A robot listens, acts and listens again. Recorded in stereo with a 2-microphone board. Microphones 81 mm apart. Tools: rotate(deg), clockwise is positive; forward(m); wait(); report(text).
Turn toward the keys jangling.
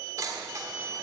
rotate(40)
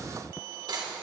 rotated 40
rotate(120)
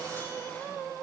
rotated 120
wait()
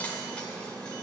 rotate(-15)
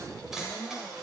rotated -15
report("Facing the keys jangling.")